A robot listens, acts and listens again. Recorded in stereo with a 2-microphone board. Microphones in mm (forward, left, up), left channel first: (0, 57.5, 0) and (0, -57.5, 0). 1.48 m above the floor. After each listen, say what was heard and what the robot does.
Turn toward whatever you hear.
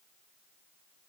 Keep listening.
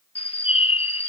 The bird: about 60° left or 120° left. Turn 60° left.
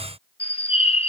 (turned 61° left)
So it is at 60° left. Turn 60° left.
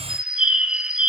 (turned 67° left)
The bird is now 10° right. Turn 10° right.
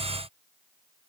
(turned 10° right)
Keep listening.
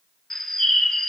Found it: a bird, straight ahead.